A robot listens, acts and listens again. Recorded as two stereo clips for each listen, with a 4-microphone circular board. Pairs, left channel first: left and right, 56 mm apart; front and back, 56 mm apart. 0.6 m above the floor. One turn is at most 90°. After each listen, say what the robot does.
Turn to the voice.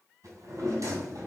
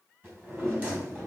Keep listening.
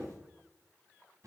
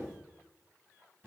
Keep listening.
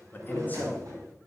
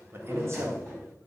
Turn 90° left.
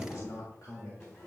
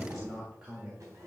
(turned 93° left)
Turn 90° left.
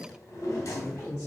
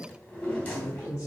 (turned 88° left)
Turn 30° left.
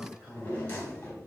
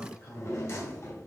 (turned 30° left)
Found it: a man speaking, straight ahead.